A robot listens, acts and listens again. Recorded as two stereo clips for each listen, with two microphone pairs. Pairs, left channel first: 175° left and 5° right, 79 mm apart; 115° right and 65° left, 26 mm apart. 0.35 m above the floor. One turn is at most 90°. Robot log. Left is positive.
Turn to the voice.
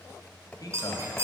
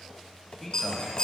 note: The man speaking: 160° left.
cmd yaw +90
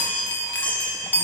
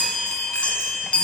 note: Nothing new. It was at 70° left.
cmd yaw +70
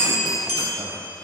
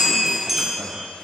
cmd idle
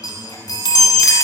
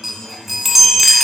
end: Facing where the man speaking came from. I can't hear it now.